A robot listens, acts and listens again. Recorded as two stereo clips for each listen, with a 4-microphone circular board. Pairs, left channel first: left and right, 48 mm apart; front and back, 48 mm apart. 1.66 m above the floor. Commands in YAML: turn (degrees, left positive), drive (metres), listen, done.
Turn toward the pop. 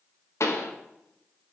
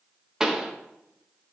turn: 105
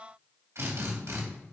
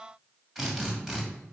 done: "Facing where the pop came from. I can't hear it now."